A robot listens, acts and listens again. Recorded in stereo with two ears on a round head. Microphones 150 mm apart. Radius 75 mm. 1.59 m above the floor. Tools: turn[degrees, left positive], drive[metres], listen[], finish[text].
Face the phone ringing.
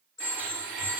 Thought: The phone ringing: about 25° left or 155° left.
Action: turn[25]
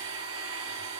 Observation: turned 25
Action: listen[]
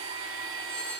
Thought: So it is at 130° left.
Action: turn[130]
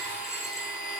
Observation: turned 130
Action: listen[]
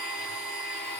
Action: listen[]
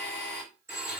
Thought: The phone ringing is now 15° right.
Action: turn[-15]
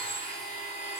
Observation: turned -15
Action: listen[]
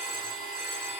Action: listen[]
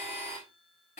Action: finish[I heard a phone ringing from this way, but can't make it out now.]